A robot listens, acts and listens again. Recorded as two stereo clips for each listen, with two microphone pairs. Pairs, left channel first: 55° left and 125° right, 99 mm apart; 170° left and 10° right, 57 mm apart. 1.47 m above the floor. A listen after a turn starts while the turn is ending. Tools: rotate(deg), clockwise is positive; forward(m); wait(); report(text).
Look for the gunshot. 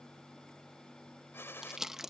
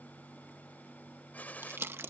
rotate(-120)
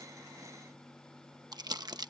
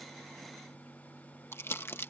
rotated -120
report("Facing where the gunshot came from. I can't hear it now.")